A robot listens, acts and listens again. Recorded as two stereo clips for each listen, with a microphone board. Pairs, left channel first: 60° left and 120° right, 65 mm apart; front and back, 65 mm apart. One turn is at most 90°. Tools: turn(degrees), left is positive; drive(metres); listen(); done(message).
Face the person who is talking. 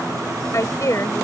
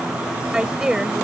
turn(degrees=90)
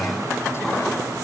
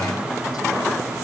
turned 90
turn(degrees=10)
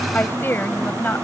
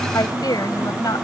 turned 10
done("Found it: a woman speaking, straight ahead.")